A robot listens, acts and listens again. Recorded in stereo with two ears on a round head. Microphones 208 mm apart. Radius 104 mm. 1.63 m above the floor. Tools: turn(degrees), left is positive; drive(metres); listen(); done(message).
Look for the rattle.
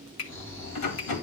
turn(degrees=90)
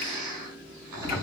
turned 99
turn(degrees=-10)
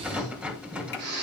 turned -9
done("Facing the rattle.")